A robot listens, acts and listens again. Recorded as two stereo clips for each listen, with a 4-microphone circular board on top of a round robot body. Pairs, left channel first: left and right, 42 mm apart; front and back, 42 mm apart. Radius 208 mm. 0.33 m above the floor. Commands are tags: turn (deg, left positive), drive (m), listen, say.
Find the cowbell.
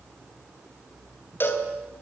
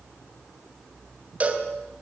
<turn deg="120"/>
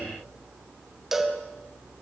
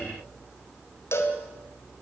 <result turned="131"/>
<turn deg="-10"/>
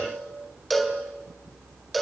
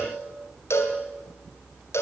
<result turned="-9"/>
<say>Facing the cowbell.</say>